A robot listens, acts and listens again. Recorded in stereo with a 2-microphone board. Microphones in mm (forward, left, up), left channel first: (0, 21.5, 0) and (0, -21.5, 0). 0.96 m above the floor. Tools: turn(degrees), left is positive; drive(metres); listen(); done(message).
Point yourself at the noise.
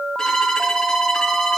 turn(degrees=30)
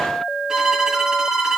turn(degrees=-15)
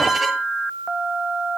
done("Facing the violin.")